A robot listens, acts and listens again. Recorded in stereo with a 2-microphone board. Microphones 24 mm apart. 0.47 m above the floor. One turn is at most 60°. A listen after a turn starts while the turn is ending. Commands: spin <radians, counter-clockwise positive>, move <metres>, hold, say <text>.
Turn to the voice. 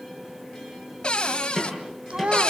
spin -0.96
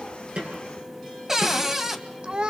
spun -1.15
spin -0.87
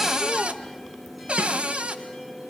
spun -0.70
spin -0.17
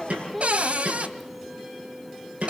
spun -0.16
say Facing the child speaking.